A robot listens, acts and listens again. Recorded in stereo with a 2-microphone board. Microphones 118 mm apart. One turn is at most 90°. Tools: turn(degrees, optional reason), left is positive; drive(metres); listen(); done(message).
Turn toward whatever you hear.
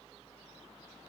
listen()
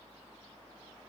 listen()
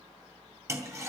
turn(degrees=-25, reason="The toilet flushing: about 25° right or 155° right.")
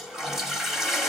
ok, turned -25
done("Facing the toilet flushing.")